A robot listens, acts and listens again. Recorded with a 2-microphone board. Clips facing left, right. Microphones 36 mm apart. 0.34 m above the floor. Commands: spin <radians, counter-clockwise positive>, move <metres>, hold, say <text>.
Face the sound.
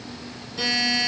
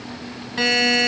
spin -1.05
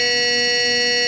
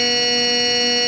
say Found it: a buzzer, straight ahead, under 1 m away.